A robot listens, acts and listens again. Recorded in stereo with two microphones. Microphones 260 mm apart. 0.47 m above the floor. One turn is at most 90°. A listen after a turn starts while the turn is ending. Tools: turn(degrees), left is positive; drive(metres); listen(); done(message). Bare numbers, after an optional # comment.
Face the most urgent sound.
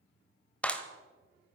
listen()
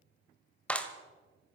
listen()
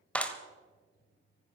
done("I can't make out anything urgent to turn to.")